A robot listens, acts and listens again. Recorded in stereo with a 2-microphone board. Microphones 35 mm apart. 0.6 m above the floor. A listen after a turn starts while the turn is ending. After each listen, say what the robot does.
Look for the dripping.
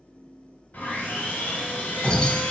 Turn 30° left.
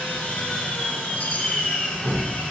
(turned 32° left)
Turn 25° right.
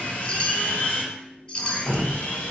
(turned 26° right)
Facing the dripping.